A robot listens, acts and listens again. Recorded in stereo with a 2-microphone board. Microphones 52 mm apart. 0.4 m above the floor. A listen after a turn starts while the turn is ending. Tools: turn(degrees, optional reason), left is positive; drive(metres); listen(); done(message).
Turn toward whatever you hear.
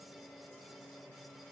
listen()
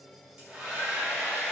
turn(degrees=-20, reason="The hair dryer: about 20° right or 160° right.")
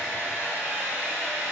turn(degrees=-145, reason="So it is at 145° right.")
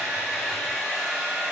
done("Facing the hair dryer, 1 to 2 m away.")